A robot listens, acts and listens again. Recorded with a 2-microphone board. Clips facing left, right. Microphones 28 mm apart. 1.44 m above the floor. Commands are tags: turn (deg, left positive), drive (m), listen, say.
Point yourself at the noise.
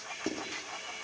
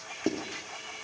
<turn deg="-20"/>
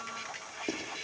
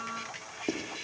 <say>Found it: writing, straight ahead, 2 to 4 m away.</say>